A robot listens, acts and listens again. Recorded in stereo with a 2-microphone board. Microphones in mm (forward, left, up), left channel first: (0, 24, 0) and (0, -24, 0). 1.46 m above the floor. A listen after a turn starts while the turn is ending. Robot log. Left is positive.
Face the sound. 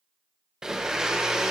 cmd yaw -30
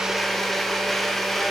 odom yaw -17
end: Facing the blender.